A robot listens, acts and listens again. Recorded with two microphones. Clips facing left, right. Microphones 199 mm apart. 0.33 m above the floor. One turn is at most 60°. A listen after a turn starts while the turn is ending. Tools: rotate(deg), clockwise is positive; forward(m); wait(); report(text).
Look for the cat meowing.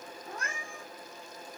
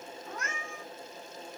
rotate(-35)
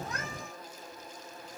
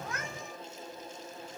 wait()
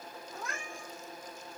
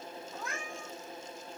report("Facing the cat meowing, 2 to 4 m away.")